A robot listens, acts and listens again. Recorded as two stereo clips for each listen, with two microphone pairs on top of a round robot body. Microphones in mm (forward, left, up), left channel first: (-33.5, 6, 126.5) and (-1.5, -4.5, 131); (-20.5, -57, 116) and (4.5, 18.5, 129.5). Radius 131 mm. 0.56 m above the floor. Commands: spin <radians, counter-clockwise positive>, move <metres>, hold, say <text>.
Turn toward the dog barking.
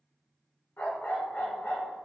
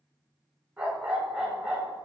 spin 2.62
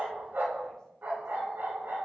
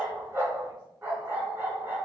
spin 0.17
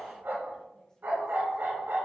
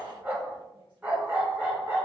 say Found it: a dog barking, straight ahead.